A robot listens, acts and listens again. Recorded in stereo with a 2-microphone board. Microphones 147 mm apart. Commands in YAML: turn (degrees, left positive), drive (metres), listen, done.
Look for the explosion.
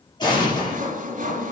turn: 30
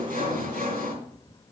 listen: true
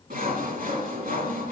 done: "I heard an explosion, but can't make it out now. It was about straight ahead or 120° left."